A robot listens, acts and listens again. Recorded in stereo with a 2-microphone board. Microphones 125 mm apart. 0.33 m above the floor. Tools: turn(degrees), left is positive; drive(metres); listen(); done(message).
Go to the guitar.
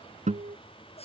turn(degrees=-75)
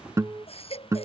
turn(degrees=-25)
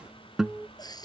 drive(metres=1.0)
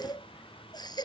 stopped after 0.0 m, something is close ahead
listen()
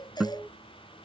done("Something is in my way. I am facing the guitar but have not reached it.")